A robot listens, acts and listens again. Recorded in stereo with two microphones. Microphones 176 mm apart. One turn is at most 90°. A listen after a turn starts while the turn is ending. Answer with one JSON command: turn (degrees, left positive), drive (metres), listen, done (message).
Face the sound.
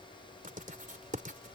{"turn": -50}
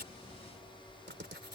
{"turn": -80}
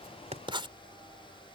{"turn": -25}
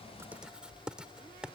{"done": "Found it: writing, straight ahead."}